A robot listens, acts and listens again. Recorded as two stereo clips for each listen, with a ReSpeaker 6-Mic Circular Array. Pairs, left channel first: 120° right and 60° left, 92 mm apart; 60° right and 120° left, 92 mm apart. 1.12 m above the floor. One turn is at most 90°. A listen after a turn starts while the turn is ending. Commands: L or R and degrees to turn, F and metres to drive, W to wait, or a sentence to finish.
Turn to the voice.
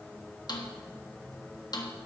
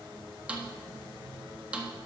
W
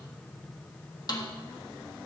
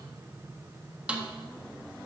W
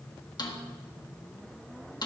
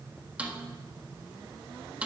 I can't make out anyone speaking to turn to.